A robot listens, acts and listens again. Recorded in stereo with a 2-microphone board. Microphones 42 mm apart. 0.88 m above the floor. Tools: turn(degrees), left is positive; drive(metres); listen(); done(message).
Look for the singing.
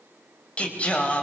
turn(degrees=30)
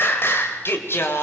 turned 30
turn(degrees=115)
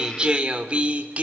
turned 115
turn(degrees=-30)
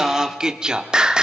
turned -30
turn(degrees=-15)
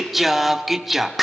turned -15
done("Found it: singing, straight ahead.")